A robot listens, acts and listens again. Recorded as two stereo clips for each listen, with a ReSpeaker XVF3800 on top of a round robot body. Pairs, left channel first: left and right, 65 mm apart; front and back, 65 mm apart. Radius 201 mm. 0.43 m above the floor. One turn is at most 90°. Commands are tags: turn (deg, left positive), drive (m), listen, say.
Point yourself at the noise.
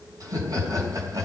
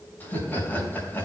<turn deg="-60"/>
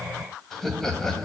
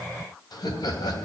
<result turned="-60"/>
<turn deg="10"/>
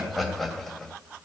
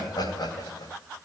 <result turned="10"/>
<say>Facing the laughter, 2 to 4 m away.</say>